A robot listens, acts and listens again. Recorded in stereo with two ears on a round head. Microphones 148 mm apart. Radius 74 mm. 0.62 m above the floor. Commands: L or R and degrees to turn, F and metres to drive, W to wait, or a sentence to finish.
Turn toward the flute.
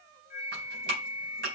L50
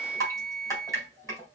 Facing the flute, 1 to 2 m away.